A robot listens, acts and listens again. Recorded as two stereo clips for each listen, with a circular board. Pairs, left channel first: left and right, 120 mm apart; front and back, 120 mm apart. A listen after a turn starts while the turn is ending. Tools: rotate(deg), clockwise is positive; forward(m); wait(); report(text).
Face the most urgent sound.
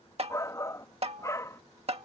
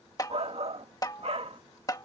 rotate(-155)
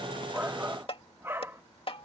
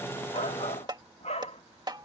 rotate(20)
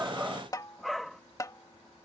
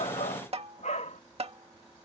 report("Found it: a shout, straight ahead.")